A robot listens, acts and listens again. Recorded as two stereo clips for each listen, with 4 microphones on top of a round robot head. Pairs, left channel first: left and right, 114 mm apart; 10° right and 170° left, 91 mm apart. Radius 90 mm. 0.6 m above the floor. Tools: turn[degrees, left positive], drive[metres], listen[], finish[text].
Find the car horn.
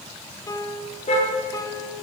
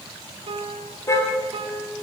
Thought: The car horn: 50° left.
Action: turn[50]
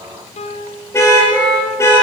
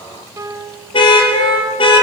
Thought: The car horn is now 20° left.
Action: turn[20]
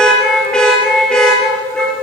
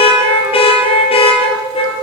Action: finish[Facing the car horn, over 4 m away.]